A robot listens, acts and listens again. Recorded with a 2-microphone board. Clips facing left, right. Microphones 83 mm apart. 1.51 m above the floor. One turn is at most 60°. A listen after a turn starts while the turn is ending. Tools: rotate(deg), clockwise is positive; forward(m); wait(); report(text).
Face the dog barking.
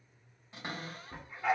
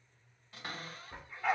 rotate(-30)
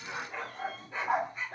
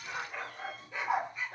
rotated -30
rotate(-60)
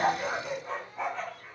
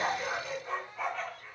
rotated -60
rotate(-30)
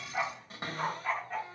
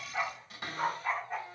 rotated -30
rotate(10)
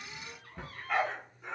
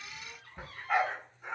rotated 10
rotate(15)
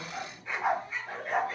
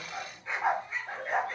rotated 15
report("Found it: a dog barking, straight ahead, 1 to 2 m away.")